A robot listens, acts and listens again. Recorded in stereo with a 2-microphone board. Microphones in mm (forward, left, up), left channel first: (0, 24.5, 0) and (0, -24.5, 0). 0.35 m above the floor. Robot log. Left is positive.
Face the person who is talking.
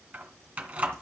cmd idle
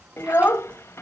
note: The child speaking: about 60° left or 120° left.
cmd yaw +60
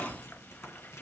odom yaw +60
cmd idle
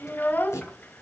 note: So it is at 40° left.
cmd yaw +40
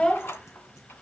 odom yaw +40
note: The child speaking is now 20° left.
cmd yaw +20
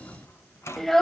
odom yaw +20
end: Facing the child speaking, under 1 m away.